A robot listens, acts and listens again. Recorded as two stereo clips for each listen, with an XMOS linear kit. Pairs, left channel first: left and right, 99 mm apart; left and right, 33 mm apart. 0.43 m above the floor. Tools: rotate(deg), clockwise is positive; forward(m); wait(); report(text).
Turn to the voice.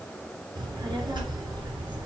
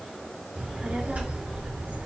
rotate(50)
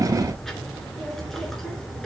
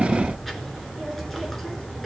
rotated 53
report("Facing the child speaking, 2 to 4 m away.")